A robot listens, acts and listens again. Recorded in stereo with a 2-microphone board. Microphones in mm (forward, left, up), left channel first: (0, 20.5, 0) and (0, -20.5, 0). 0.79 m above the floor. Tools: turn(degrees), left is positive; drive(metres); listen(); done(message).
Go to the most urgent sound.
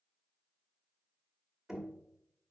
listen()
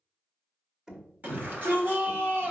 turn(degrees=-45)
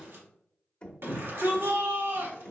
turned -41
turn(degrees=-90)
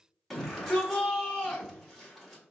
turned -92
drive(metres=1.0)
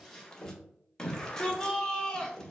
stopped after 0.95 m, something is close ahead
turn(degrees=15)
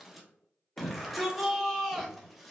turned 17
done("I am next to the shout.")